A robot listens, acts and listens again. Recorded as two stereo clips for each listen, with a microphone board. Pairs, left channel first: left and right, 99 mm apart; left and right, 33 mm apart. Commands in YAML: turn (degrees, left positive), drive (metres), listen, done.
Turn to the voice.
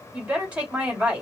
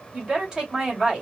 turn: -30
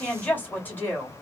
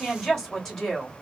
turn: 15
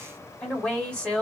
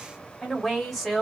turn: 10
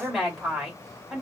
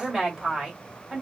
done: "Found it: a woman speaking, straight ahead, 2 to 4 m away."